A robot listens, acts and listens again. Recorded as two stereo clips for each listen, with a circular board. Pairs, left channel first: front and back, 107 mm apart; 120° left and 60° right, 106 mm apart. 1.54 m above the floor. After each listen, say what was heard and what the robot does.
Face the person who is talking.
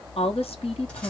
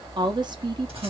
The woman speaking: 20° right. Turn 20° right.
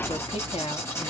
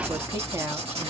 Facing the woman speaking, under 1 m away.